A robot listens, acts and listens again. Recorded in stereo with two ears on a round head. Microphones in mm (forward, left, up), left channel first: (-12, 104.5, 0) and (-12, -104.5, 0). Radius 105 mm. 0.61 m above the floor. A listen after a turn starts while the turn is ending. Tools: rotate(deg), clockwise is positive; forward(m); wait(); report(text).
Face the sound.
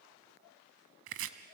rotate(60)
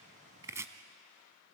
rotate(15)
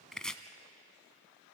report("Facing the chopping.")